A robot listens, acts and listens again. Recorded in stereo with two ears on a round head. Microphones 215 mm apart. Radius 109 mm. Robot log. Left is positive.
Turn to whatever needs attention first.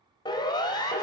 note: The siren: about 20° left or 160° left.
cmd yaw +20
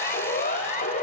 note: So it is at 140° left.
cmd yaw +140
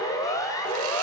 note: The siren is now 15° left.
cmd yaw +15
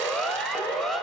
end: Found it: a siren, straight ahead.